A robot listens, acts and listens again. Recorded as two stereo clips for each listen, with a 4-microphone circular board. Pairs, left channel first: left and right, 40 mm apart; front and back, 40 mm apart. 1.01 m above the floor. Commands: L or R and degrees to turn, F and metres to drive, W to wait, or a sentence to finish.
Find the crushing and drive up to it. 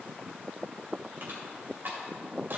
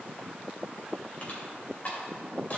R55
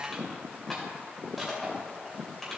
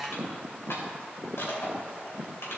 F1.0
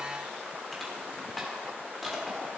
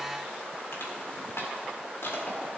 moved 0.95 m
F1.0
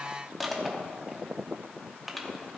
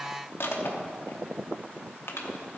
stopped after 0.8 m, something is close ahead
Arrived at the crushing, straight ahead.